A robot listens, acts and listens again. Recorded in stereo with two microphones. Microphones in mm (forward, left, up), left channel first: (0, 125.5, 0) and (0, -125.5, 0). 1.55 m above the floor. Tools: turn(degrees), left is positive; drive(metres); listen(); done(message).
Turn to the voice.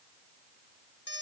listen()
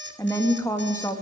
turn(degrees=30)
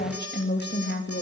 turn(degrees=140)
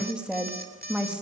done("Facing the woman speaking.")